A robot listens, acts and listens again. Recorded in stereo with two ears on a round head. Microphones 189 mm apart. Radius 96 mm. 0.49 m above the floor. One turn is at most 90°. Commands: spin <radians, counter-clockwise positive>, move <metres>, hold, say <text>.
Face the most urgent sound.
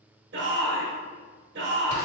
spin -1.05
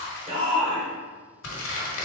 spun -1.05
spin -0.52
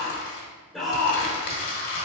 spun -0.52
say Found it: a shout, straight ahead.